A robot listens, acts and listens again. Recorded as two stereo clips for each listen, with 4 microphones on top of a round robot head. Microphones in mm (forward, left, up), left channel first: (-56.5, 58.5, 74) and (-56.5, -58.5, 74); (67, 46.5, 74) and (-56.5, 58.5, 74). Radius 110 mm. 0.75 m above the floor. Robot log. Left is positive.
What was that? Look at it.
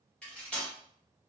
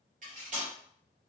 note: The cutlery clinking: 170° left.
cmd yaw +170
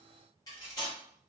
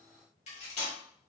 note: The cutlery clinking is now 25° left.
cmd yaw +25
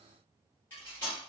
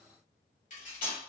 note: The cutlery clinking is now 15° left.
cmd yaw +15
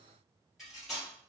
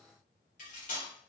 end: Found it: cutlery clinking, straight ahead, 1 to 2 m away.